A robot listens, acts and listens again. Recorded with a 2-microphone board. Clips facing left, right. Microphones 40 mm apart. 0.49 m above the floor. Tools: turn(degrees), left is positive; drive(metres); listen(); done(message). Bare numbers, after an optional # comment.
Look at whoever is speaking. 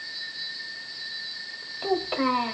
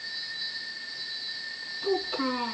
# The child speaking: about 60° left or 120° left.
turn(60)
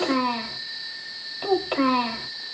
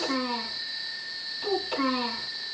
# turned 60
# So it is at 45° left.
turn(45)
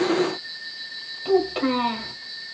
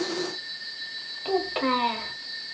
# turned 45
# The child speaking is now 15° right.
turn(-15)
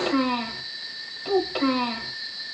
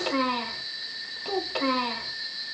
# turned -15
done("Found it: a child speaking, straight ahead, 1 to 2 m away.")